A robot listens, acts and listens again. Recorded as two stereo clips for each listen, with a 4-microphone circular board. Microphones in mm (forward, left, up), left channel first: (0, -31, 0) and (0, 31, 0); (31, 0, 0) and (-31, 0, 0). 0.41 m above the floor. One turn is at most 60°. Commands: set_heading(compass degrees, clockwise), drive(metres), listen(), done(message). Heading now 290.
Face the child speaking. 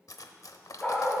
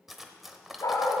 listen()
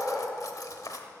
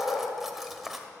listen()
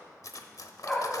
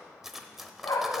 done("I can't make out a child speaking, only a dog barking and cutlery clinking.")